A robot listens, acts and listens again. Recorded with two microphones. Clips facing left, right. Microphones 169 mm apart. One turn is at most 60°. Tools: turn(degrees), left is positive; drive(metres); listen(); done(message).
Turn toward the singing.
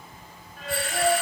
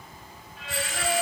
turn(degrees=55)
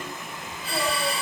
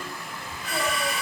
listen()
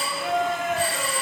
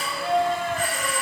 turn(degrees=10)
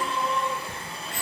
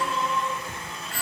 done("Found it: singing, straight ahead.")